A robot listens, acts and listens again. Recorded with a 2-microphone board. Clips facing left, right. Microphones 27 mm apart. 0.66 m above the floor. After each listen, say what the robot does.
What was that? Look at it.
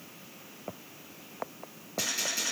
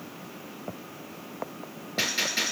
Turn 50° right.
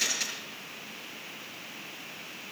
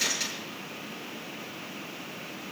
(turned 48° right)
Found it: a gunshot, straight ahead.